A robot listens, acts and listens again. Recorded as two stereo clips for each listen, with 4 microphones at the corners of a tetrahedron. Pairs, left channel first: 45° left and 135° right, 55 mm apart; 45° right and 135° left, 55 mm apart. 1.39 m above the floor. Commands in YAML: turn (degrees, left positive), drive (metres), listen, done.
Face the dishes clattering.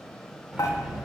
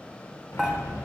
turn: 50
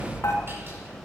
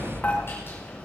turn: 15
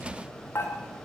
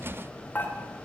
done: "Facing the dishes clattering, 2 to 4 m away."